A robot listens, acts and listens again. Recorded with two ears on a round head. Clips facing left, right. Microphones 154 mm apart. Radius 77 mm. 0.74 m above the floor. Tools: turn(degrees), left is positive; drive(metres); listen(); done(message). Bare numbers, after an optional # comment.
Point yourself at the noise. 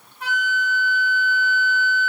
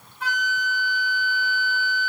# The flute: about 65° right or 115° right.
turn(-65)
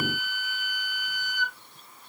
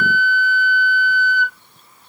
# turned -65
# So it is at 30° right.
turn(-30)
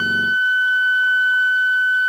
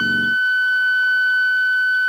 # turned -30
done("Facing the flute, 1 to 2 m away.")